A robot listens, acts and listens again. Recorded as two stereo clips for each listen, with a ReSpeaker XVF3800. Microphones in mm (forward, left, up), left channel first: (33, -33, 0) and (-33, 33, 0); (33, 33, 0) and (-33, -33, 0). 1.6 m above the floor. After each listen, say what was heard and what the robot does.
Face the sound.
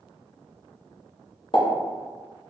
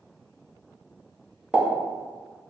The pop: 60° right. Turn 60° right.
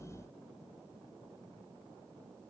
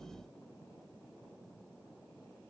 Facing where the pop came from. I can't hear it now.